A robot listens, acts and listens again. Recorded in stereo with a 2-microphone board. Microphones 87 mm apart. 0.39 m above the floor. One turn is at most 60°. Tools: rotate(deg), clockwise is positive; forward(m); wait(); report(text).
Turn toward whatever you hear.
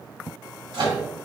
rotate(60)
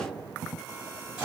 rotate(15)
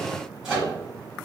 report("Found it: a microwave, straight ahead.")